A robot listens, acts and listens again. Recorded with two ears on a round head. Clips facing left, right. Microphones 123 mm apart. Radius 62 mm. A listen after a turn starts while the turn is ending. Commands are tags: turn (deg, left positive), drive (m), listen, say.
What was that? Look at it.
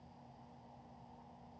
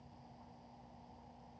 <listen/>
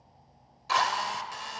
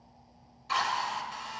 <turn deg="60"/>
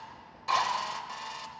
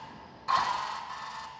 <turn deg="30"/>
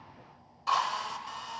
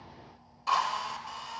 <say>Facing the drill.</say>